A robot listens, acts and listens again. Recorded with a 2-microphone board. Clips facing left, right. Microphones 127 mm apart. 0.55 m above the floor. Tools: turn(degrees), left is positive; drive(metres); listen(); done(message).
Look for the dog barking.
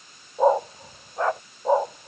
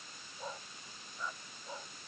turn(degrees=70)
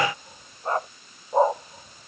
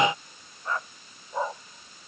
turn(degrees=40)
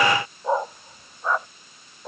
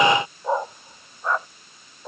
done("Found it: a dog barking, straight ahead.")